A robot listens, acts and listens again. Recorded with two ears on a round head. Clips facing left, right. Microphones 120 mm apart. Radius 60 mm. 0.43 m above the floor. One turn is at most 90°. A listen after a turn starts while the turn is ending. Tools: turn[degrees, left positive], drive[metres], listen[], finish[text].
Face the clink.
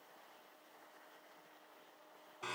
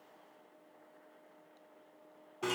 Action: listen[]
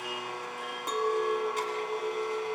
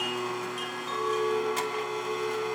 Thought: The clink: about 60° left or 120° left.
Action: turn[60]
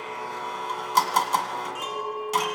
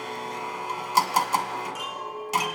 Thought: So it is at 55° left.
Action: turn[55]
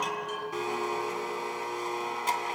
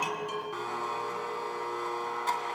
Thought: The clink is now 25° left.
Action: turn[25]
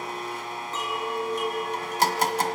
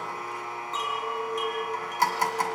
Thought: The clink is now 10° left.
Action: turn[10]
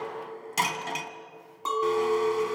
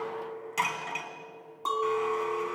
Action: finish[Facing the clink.]